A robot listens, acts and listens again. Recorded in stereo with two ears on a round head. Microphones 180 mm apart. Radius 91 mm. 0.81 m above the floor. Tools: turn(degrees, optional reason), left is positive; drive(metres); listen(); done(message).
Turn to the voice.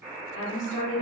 turn(degrees=60, reason="The woman speaking: about 60° left or 120° left.")
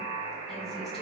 listen()
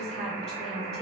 done("Facing the woman speaking, 1 to 2 m away.")